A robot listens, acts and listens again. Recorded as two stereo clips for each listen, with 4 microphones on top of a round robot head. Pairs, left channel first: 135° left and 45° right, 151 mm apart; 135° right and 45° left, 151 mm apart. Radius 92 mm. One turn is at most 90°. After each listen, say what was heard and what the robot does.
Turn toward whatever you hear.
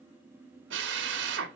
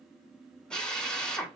The drill: 50° right. Turn 50° right.
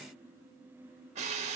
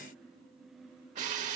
Found it: a drill, straight ahead, 1 to 2 m away.